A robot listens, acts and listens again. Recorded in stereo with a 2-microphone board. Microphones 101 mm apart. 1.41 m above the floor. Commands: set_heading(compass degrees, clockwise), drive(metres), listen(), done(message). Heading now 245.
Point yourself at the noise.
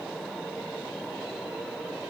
listen()
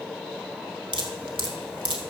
set_heading(305)
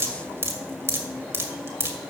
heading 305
set_heading(335)
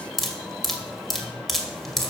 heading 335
done("Found it: dripping, straight ahead, 2 to 4 m away.")